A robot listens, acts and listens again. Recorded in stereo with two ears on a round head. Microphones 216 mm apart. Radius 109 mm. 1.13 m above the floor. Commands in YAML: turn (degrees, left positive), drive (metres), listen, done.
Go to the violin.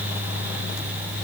listen: true
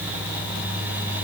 listen: true
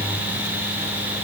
done: "I can't make out a violin."